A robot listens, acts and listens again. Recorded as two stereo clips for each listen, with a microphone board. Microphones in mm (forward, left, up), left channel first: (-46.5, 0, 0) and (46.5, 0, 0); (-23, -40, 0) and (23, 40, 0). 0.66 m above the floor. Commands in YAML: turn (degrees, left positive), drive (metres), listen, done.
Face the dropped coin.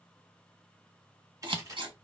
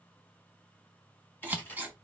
turn: -50
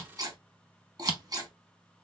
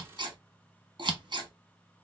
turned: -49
done: "I heard a dropped coin from this way, but can't make it out now."